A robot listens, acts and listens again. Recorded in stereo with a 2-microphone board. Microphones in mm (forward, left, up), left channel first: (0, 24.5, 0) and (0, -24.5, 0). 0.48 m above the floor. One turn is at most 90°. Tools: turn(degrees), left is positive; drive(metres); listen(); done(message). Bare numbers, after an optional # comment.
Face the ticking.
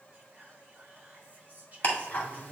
# The ticking: about 35° left or 145° left.
turn(35)
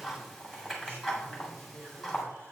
done("Found it: ticking, straight ahead, 1 to 2 m away.")